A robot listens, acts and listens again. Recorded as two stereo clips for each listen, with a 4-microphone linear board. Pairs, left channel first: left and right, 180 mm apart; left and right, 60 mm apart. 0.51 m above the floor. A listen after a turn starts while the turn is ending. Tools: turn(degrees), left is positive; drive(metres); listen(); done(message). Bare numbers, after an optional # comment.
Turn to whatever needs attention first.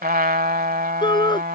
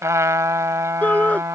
# The shout: about 25° left or 155° left.
turn(25)
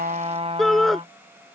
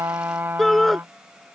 done("Found it: a shout, straight ahead.")